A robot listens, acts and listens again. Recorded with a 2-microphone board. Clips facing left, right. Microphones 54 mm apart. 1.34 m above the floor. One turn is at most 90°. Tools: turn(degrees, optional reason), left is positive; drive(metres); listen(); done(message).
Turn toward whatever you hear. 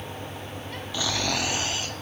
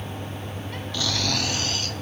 turn(degrees=20, reason="The snoring: about 20° left or 160° left.")
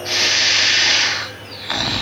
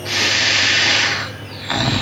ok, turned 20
done("Facing the snoring.")